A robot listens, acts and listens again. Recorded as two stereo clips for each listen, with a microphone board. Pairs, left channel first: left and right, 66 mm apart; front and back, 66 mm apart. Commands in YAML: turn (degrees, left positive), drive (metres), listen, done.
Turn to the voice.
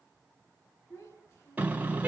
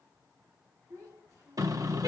turn: 140
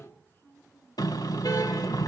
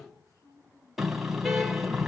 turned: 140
turn: 30
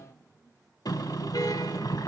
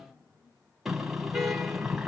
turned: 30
turn: 40
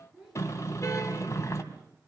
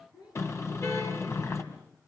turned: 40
turn: -10
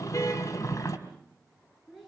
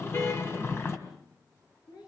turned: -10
done: "Found it: a child speaking, straight ahead."